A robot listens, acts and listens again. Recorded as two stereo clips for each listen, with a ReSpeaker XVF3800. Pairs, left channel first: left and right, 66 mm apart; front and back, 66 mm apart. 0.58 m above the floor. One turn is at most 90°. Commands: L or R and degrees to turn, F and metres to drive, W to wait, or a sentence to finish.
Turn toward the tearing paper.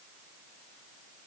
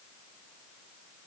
W
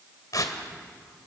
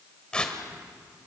L75
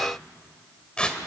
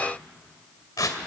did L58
L15
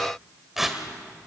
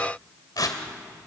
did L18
Facing the tearing paper.